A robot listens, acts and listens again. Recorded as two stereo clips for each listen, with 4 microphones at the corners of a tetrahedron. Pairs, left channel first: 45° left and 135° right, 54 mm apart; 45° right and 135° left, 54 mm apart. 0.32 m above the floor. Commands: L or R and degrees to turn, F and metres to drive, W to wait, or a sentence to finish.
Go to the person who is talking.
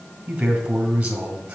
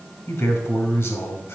R70
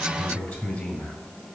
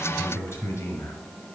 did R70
R10
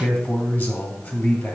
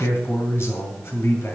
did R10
F1.0
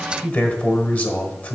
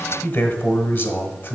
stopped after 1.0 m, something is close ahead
I am next to the man speaking.